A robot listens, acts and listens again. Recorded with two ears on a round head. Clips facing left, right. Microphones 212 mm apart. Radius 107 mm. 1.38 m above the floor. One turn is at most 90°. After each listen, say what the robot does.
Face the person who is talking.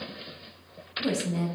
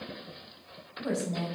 Turn 55° left.
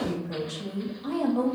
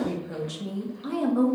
Turn 20° right.
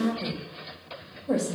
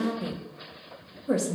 Turn 20° right.
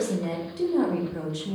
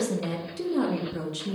Turn 15° right.
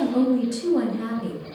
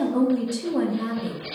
Facing the woman speaking.